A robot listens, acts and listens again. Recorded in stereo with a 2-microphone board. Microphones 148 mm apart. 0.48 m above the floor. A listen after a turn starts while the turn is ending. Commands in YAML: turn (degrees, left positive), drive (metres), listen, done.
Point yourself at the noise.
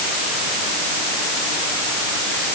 listen: true
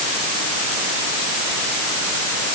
listen: true
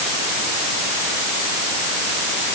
done: "I can't make out anything."